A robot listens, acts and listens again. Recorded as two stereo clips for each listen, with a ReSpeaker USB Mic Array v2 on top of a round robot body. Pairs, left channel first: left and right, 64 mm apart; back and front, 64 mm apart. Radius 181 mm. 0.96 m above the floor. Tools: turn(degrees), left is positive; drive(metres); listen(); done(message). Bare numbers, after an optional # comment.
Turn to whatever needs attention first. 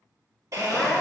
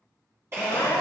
# The crying: 155° left.
turn(155)
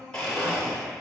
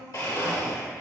# The crying is now 10° left.
turn(10)
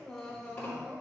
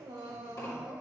done("Found it: crying, straight ahead, 1 to 2 m away.")